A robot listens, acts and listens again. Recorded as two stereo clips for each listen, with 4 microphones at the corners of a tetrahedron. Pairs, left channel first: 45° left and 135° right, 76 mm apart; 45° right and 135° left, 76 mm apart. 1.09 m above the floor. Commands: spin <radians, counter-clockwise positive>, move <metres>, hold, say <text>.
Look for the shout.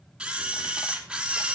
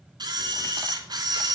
hold
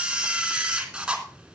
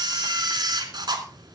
hold
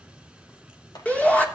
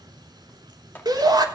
spin 2.01
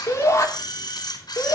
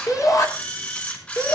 say Facing the shout.